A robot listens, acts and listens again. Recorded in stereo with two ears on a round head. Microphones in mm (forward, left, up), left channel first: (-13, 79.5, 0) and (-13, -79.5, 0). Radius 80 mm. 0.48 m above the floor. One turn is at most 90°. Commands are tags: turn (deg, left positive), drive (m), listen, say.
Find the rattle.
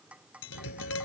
<turn deg="55"/>
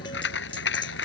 <turn deg="70"/>
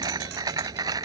<turn deg="-20"/>
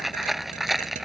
<say>Facing the rattle.</say>